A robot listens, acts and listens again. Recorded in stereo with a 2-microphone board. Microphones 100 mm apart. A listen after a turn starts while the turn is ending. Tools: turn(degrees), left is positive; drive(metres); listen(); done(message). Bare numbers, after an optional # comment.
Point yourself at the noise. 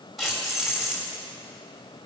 turn(-30)
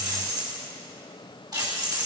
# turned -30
# So it is at 140° right.
turn(-140)
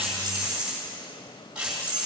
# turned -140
# The keys jangling is now 10° right.
turn(-10)
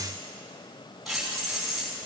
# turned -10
done("Found it: keys jangling, straight ahead, over 4 m away.")